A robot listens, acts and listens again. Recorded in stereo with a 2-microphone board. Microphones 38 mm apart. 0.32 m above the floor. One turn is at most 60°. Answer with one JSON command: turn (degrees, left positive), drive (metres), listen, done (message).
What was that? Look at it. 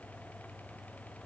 {"listen": true}
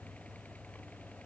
{"listen": true}
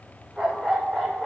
{"turn": 30}
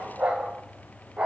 {"turn": -30}
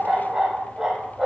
{"turn": -15}
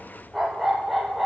{"done": "Found it: a dog barking, straight ahead."}